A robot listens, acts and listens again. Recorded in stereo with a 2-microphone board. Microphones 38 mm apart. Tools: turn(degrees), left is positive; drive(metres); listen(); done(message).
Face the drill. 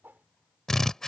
turn(degrees=30)
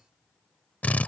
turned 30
turn(degrees=140)
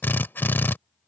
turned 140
turn(degrees=65)
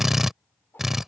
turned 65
done("Found it: a drill, straight ahead.")